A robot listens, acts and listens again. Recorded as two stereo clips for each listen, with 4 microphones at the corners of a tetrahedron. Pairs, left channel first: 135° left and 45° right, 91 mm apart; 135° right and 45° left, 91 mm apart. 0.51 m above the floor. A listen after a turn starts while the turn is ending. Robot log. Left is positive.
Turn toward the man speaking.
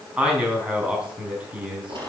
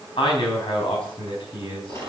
note: The man speaking: 125° right.
cmd yaw -125
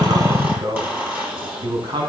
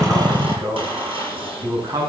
note: The man speaking is now 10° right.
cmd yaw -10
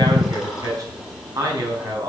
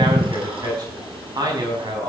end: Found it: a man speaking, straight ahead, over 4 m away.